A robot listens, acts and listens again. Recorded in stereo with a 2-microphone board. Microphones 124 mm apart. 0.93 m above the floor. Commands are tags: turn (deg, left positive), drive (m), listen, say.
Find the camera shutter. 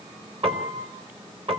<listen/>
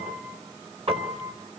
<listen/>
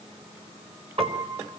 <say>I can't make out a camera shutter, only a piano.</say>